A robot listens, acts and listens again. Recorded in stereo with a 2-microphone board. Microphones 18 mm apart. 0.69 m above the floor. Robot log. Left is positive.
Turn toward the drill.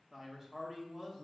cmd idle
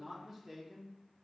cmd idle
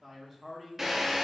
note: The drill: about 15° right or 165° right.
cmd yaw -15
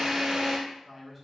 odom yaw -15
note: So it is at 145° right.
cmd yaw -145
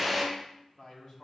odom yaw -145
note: The drill is now 10° right.
cmd yaw -10
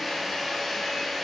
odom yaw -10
end: Facing the drill, 1 to 2 m away.